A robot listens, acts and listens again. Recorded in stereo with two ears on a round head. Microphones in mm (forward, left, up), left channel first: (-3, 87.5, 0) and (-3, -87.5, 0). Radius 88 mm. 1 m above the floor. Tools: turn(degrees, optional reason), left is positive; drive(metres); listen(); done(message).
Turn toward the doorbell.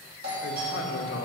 turn(degrees=-55, reason="The doorbell: about 55° right or 125° right.")
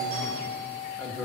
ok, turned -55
turn(degrees=-60, reason="So it is at 60° right.")
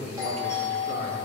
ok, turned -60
turn(degrees=-20, reason="The doorbell is now 20° right.")
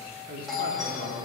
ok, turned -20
done("Facing the doorbell, 2 to 4 m away.")